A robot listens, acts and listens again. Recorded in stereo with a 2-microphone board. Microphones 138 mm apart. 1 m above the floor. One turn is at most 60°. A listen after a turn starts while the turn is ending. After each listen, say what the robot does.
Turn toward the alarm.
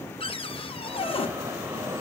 Turn 20° right.
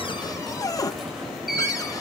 Found it: an alarm, straight ahead.